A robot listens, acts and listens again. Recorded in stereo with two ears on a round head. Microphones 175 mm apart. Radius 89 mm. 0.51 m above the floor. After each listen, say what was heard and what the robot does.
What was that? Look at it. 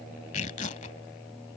The tearing paper: about 40° left or 140° left. Turn 40° left.
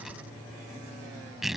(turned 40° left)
Found it: tearing paper, straight ahead.